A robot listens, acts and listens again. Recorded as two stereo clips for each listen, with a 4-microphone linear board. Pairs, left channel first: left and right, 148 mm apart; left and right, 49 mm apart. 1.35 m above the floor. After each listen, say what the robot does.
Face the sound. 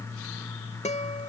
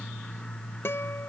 Turn 50° left.
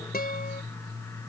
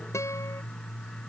Keep listening.
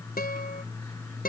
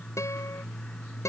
Turn 80° left.
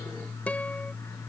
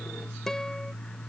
Keep listening.
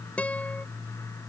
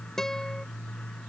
Turn 10° left.
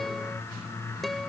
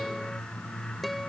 Found it: a guitar, straight ahead.